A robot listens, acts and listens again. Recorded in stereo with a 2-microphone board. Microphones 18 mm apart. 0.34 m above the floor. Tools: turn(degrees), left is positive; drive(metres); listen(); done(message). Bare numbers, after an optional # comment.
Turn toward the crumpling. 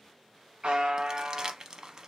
# The crumpling: about 40° right or 140° right.
turn(-40)
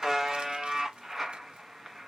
listen()
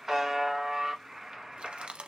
# So it is at 100° right.
turn(-100)
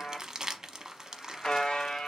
# The crumpling is now 30° right.
turn(-30)
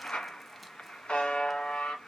listen()
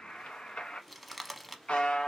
done("Facing the crumpling.")